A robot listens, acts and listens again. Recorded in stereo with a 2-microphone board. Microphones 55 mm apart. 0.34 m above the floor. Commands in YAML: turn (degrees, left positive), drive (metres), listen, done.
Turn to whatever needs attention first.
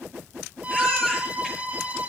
turn: 30
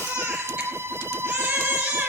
turn: -20
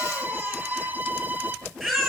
done: "Found it: a baby crying, straight ahead."